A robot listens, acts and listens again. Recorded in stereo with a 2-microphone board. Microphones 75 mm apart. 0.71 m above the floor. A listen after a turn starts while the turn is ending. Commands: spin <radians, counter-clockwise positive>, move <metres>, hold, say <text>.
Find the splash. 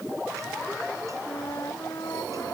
hold
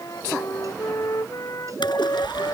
spin 1.57
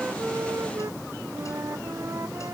say I heard a splash from this way, but can't make it out now.